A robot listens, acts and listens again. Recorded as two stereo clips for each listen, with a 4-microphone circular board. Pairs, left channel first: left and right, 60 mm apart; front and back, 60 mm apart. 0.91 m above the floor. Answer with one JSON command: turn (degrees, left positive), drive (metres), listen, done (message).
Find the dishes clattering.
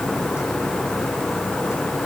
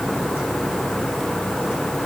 {"listen": true}
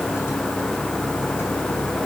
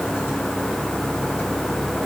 {"listen": true}
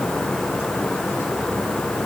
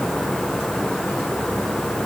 {"done": "I can't make out dishes clattering to turn to."}